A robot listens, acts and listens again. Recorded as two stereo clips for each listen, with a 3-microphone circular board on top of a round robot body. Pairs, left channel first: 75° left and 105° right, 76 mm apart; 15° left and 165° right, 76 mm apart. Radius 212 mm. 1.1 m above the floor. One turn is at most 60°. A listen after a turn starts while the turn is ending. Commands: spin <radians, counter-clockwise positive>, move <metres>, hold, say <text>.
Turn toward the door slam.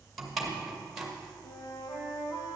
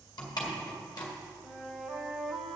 spin -0.35
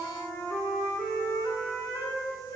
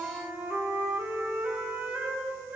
say I heard a door slam from this way, but can't make it out now.